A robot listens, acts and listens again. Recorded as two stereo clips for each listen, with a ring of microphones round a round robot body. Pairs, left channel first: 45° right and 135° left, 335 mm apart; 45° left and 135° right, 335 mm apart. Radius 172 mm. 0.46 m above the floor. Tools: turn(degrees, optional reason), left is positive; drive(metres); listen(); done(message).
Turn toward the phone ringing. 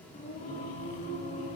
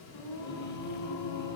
listen()
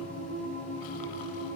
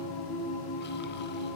listen()
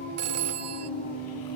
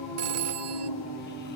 turn(degrees=180, reason="The phone ringing: straight behind.")
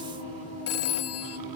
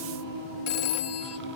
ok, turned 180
done("Facing the phone ringing.")